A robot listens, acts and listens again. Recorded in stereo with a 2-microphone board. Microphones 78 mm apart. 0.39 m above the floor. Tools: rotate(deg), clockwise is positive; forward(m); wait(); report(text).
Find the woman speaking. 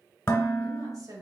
rotate(50)
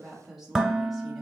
report("Found it: a woman speaking, straight ahead.")